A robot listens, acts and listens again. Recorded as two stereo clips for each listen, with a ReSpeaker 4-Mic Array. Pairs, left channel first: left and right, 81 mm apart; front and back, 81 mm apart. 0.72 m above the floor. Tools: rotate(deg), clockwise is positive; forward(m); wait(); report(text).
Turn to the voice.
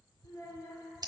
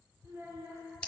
rotate(-130)
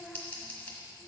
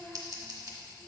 report("Facing the child speaking, 1 to 2 m away.")